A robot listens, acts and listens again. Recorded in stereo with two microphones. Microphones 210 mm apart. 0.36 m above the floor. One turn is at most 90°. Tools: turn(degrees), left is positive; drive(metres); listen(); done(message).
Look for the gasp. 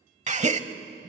turn(degrees=-35)
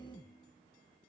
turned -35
listen()
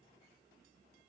done("I heard a gasp, but can't make it out now. It was about straight ahead or 110° right.")